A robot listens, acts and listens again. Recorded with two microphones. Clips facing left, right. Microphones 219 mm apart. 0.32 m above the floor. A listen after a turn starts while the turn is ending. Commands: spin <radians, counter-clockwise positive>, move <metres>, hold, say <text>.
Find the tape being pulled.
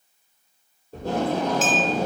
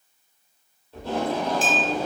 spin 0.79
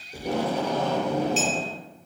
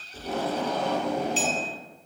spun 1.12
spin 1.22
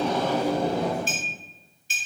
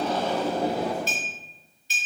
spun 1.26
say Facing the tape being pulled, 1 to 2 m away.